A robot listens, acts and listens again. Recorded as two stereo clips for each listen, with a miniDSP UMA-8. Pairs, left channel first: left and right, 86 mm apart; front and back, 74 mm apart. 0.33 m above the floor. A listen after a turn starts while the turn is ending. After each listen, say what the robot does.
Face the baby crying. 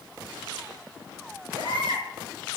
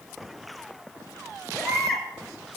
Turn 85° right.
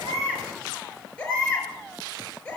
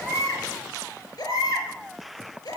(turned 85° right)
Turn 15° left.
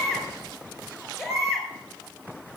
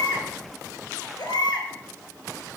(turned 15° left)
Facing the baby crying, over 4 m away.